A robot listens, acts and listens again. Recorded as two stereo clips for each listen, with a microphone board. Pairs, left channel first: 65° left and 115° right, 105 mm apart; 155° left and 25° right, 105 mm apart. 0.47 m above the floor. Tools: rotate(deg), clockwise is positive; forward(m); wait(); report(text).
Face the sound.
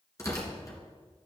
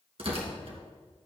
rotate(-10)
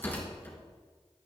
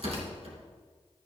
report("Found it: tearing paper, straight ahead.")